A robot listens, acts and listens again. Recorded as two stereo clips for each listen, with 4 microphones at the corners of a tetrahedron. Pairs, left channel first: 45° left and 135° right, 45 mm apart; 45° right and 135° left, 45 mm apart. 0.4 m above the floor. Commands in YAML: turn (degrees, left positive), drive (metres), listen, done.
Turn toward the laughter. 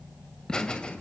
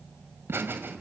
turn: 110
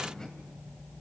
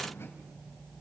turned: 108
listen: true
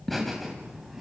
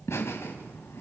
turn: -50
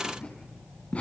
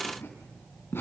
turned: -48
turn: -15
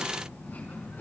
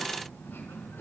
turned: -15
done: "Found it: laughter, straight ahead."